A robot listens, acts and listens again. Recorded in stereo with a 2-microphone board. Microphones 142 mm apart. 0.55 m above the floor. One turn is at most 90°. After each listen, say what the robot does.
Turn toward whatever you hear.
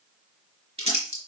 Turn 45° right.
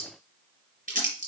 Turn 90° right.
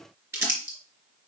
Turn 20° right.
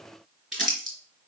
Found it: crumpling, straight ahead, 2 to 4 m away.